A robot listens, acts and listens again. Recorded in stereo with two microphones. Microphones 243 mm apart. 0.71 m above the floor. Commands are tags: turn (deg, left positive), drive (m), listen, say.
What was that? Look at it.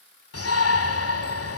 <turn deg="75"/>
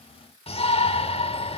<turn deg="25"/>
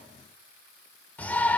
<say>Found it: a shout, straight ahead.</say>